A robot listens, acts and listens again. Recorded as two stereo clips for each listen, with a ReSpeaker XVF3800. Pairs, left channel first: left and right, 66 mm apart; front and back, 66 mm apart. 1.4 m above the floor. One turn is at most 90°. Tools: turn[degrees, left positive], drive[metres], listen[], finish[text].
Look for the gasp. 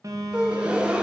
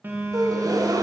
Thought: The gasp: 165° right.
Action: turn[-90]
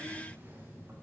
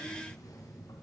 Thought: Nothing new. It was at 75° right.
Action: turn[-75]
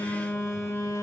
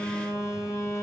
Action: finish[Facing where the gasp came from. I can't hear it now.]